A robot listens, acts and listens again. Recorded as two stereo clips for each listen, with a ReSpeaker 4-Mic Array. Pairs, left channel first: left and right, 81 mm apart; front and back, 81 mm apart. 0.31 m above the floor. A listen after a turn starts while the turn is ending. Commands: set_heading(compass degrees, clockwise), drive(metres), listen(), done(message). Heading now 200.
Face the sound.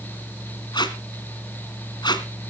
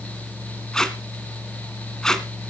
set_heading(120)
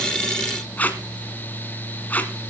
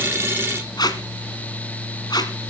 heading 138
set_heading(118)
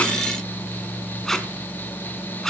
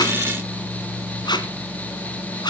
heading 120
done("Found it: tape being pulled, straight ahead, 1 to 2 m away.")